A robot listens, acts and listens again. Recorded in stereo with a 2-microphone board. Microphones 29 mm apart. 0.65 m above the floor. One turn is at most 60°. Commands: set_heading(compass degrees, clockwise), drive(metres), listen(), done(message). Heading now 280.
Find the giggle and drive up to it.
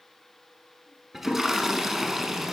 listen()
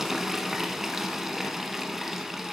listen()
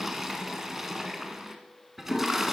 done("I can't make out a giggle to turn to.")